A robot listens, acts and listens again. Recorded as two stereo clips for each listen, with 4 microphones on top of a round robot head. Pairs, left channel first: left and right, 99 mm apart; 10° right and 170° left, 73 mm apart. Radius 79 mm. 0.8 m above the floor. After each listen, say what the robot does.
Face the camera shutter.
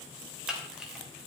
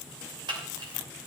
Turn 175° right.
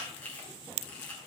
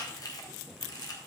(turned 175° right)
Turn 15° left.
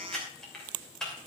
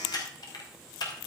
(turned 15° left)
Found it: a camera shutter, straight ahead, 2 to 4 m away.